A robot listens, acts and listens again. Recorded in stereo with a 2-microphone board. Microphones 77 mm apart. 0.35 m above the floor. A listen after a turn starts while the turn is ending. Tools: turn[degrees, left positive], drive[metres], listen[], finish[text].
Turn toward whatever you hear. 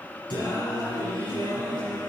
Action: turn[90]
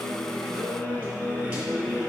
Thought: So it is at 15° right.
Action: turn[-15]
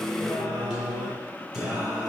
Action: finish[Found it: singing, straight ahead.]